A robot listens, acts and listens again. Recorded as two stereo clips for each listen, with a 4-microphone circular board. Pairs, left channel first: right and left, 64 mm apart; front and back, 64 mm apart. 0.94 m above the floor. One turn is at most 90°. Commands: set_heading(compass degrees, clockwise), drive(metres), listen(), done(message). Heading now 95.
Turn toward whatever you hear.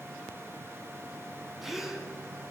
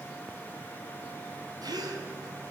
set_heading(5)
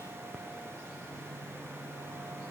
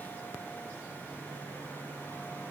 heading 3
set_heading(278)
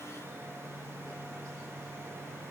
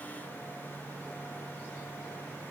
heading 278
done("I heard a gasp from this way, but can't make it out now.")